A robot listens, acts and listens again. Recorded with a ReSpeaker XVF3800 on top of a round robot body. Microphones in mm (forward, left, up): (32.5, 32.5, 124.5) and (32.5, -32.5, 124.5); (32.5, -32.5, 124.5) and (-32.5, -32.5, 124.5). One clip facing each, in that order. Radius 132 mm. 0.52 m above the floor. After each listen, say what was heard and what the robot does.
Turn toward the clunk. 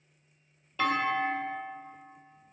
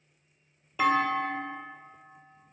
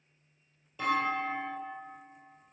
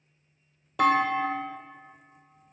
The clunk: 170° right. Turn 170° right.
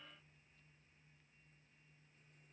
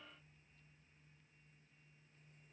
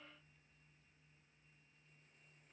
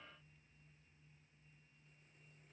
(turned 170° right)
Facing where the clunk came from. I can't hear it now.